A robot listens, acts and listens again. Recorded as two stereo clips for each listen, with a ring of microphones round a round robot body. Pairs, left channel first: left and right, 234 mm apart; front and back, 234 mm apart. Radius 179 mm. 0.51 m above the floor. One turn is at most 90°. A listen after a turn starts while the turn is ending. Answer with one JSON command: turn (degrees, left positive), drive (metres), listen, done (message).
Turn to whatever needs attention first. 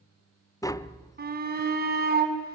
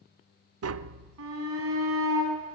{"turn": -90}
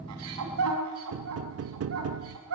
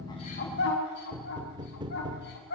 {"turn": -55}
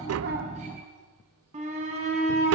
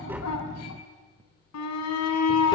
{"turn": -20}
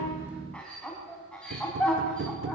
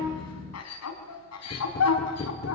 {"done": "Found it: a shout, straight ahead."}